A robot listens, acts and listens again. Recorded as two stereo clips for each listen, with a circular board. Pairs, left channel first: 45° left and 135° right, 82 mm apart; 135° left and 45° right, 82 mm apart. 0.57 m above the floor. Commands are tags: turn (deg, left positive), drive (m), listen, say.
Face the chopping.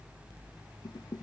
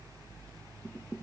<listen/>
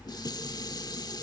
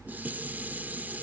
<listen/>
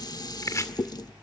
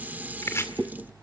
<turn deg="90"/>
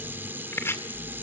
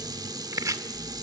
<say>Found it: chopping, straight ahead, 1 to 2 m away.</say>